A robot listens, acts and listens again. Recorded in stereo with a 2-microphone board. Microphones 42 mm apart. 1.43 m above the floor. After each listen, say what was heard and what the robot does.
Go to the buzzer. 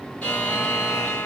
The buzzer: about 40° left or 140° left. Turn 40° left.
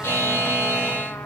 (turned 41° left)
So it is at 100° left. Turn 100° left.
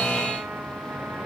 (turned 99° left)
Drive 1.0 m forward.
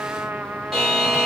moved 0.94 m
Drive 1.0 m forward.
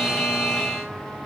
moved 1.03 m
The buzzer is now 10° left. Turn 10° left.
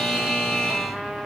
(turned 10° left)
Drive 1.0 m forward.
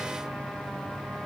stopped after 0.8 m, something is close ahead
Keep listening.
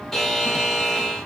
The buzzer is now 10° left. Turn 10° left.
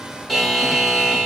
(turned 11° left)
Arrived at the buzzer, straight ahead.